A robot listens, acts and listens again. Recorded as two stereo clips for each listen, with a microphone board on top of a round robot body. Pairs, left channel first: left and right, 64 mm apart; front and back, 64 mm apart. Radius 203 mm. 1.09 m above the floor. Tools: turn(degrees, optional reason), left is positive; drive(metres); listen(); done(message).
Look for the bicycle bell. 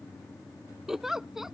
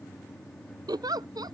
listen()
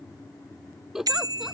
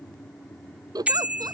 turn(degrees=-110, reason="The bicycle bell: 110° right.")
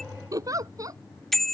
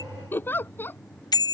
done("Facing the bicycle bell.")